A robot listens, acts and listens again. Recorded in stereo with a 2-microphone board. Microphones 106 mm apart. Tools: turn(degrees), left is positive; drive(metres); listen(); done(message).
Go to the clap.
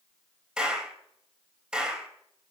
turn(degrees=-30)
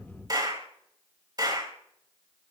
turn(degrees=-145)
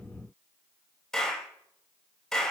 drive(metres=1.0)
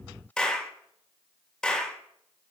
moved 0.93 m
drive(metres=1.0)
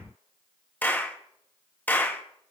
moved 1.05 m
turn(degrees=15)
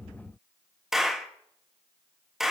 drive(metres=1.0)
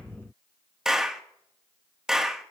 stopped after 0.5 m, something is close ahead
done("Arrived at the clap, straight ahead.")